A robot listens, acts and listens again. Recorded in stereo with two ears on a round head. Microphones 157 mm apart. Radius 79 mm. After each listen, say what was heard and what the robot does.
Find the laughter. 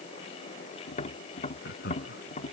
The laughter: about 55° left or 125° left. Turn 55° left.
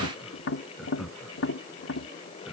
Found it: laughter, straight ahead.